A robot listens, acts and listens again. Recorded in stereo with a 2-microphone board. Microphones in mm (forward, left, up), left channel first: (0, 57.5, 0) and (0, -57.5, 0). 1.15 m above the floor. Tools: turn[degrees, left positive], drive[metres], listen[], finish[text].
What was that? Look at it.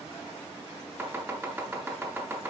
Thought: The chopping: about 15° right or 165° right.
Action: turn[-15]
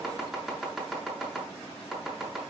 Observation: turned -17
Action: finish[Found it: chopping, straight ahead, 2 to 4 m away.]